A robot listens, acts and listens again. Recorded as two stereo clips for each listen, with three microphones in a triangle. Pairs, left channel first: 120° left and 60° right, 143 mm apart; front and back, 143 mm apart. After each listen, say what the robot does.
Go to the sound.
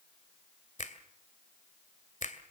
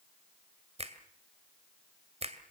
Turn 140° left.
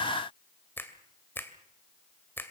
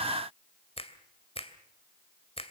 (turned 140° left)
Turn 45° left.
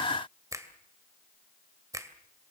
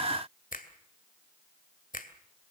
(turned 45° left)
Drive 1.0 m forward.
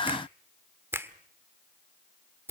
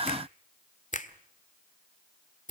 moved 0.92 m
Turn 10° left.
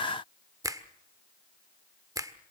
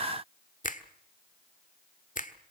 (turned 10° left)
Drive 1.0 m forward.
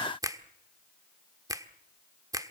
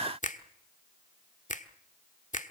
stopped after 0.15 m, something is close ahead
Arrived at the finger snap, straight ahead.